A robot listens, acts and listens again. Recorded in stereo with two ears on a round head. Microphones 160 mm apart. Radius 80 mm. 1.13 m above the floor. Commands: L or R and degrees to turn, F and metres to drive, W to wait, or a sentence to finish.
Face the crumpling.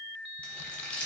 L30
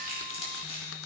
L145
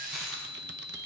W
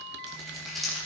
Found it: crumpling, straight ahead, 2 to 4 m away.